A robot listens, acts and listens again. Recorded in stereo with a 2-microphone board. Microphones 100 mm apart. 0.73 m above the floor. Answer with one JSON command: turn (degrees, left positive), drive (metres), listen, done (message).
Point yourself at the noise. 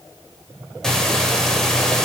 {"turn": 30}
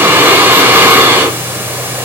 {"turn": -25}
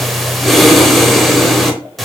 {"done": "Found it: breathing, straight ahead, under 1 m away."}